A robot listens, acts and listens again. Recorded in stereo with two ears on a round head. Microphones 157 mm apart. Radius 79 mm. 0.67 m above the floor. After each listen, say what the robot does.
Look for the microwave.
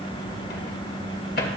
Turn 60° left.
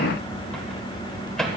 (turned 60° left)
Facing the microwave, 2 to 4 m away.